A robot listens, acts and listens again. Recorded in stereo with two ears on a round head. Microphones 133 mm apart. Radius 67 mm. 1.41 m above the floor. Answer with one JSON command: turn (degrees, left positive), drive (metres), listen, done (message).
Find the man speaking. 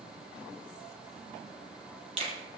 {"listen": true}
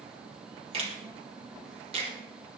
{"listen": true}
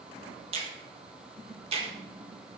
{"done": "I can't make out a man speaking to turn to."}